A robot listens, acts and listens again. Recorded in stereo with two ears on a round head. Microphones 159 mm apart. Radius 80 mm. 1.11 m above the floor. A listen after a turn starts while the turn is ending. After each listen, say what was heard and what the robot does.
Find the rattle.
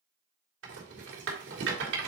Turn 90° right.
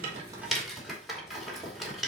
Facing the rattle.